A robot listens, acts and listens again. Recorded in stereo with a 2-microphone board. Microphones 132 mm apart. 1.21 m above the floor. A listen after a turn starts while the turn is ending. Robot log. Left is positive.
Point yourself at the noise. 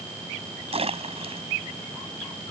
note: The splash: about 50° right or 130° right.
cmd yaw -50
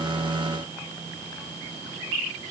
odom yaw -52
cmd idle
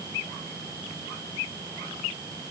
end: I heard a splash, but can't make it out now. It was about 5° left or 80° right.